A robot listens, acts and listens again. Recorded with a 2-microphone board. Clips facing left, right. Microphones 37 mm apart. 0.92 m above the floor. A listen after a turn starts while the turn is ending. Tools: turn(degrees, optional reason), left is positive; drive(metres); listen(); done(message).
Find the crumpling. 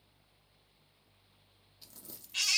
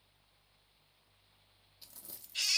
turn(degrees=-30)
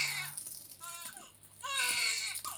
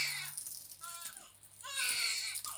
turn(degrees=20, reason="So it is at 20° left.")
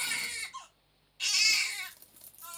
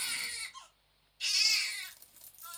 done("Facing the crumpling, under 1 m away.")